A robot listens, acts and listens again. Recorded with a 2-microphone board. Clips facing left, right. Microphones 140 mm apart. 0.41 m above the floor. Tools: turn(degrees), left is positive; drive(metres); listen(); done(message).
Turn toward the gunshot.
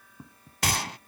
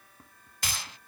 turn(degrees=70)
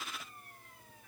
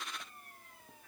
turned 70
listen()
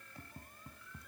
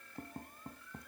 done("I heard a gunshot, but can't make it out now. It was about straight ahead or 40° left.")